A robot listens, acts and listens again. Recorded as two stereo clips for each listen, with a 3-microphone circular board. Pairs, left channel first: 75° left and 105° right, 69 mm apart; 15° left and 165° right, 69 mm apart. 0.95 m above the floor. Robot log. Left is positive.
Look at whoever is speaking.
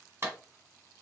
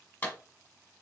cmd idle
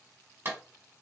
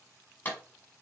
cmd idle
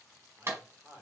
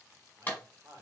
note: The man speaking: 145° right.
cmd yaw -145
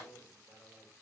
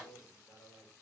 end: Found it: a man speaking, straight ahead.